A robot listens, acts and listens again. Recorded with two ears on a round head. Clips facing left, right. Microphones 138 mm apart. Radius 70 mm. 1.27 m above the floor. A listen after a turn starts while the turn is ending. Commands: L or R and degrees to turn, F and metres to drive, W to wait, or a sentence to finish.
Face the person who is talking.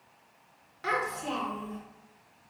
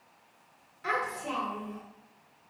L65
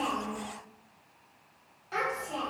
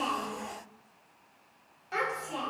Found it: a child speaking, straight ahead, 1 to 2 m away.